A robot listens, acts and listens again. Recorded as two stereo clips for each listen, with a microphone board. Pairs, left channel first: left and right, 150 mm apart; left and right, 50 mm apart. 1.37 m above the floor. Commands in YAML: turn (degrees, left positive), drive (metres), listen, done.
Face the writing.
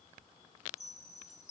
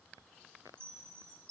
listen: true
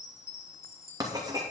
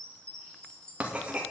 turn: -25
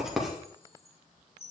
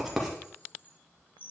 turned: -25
done: "Found it: writing, straight ahead."